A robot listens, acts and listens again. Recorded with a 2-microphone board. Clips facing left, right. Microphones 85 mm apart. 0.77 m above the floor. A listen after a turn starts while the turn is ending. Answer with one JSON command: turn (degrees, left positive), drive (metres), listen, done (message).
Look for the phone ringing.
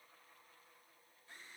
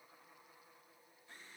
{"listen": true}
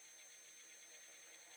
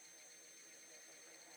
{"listen": true}
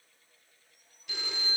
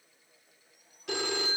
{"turn": -75}
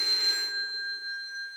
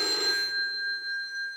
{"turn": -30}
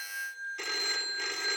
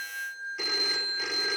{"done": "Found it: a phone ringing, straight ahead, 1 to 2 m away."}